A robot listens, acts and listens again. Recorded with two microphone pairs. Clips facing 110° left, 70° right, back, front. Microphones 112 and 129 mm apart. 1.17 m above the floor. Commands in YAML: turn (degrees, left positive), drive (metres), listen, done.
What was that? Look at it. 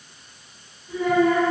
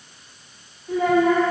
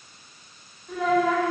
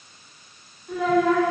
turn: -95
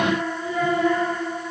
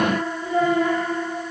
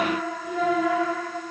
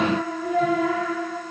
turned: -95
turn: -25
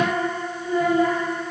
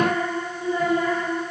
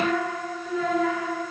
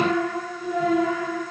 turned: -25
turn: -15
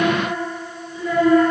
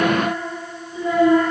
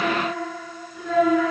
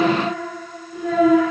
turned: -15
done: "Found it: a child speaking, straight ahead, 2 to 4 m away."